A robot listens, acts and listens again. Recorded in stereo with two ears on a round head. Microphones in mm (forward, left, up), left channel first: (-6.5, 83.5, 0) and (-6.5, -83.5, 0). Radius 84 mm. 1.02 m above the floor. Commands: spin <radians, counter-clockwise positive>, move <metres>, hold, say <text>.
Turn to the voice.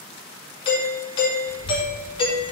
spin -1.57
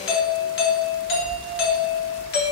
spin 0.52
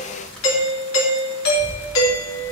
say Facing the child speaking, 2 to 4 m away.